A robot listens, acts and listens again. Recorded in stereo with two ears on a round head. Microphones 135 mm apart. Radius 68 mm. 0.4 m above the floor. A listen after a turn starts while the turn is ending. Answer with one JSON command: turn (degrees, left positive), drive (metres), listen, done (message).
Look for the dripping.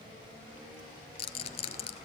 {"listen": true}
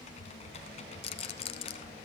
{"listen": true}
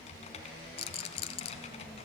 {"done": "I can't make out dripping, only typing on a keyboard and a rattle."}